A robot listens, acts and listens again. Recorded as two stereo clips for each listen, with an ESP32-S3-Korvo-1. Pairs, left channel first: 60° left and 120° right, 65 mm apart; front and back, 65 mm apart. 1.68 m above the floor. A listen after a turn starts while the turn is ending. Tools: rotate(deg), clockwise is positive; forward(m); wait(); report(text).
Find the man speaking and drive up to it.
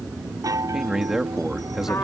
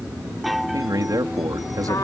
rotate(-155)
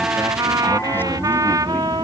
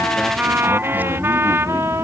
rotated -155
wait()
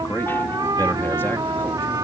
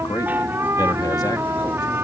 forward(1.0)
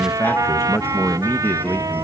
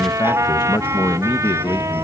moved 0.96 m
forward(1.0)
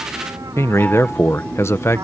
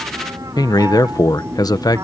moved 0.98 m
rotate(-10)
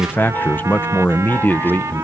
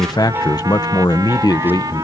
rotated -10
forward(1.0)
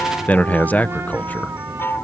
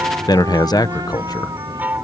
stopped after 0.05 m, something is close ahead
report("Arrived at the man speaking, straight ahead.")